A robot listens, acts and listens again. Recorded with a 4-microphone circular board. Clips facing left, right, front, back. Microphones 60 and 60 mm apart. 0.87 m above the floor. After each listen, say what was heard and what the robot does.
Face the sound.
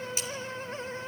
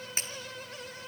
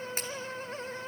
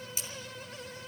The breaking glass: 40° right. Turn 40° right.
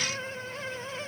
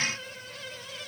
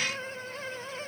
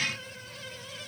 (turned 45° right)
I heard breaking glass from this way, but can't make it out now.